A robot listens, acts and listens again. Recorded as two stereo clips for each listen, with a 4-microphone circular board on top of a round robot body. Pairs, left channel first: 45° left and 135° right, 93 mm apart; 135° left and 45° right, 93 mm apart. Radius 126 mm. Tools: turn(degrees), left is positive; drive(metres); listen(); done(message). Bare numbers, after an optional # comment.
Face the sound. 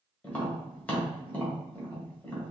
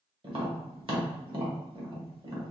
# The tapping: 30° right.
turn(-30)
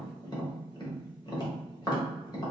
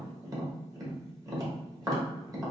done("Facing the tapping.")